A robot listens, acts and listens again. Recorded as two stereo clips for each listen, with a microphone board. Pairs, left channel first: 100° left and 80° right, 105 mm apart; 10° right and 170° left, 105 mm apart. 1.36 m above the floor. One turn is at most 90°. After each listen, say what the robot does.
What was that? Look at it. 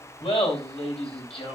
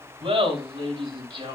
Turn 90° left.
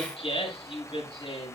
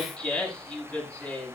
Turn 70° left.
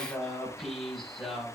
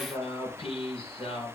Turn 10° left.
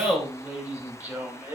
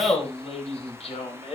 Found it: laughter, straight ahead, over 4 m away.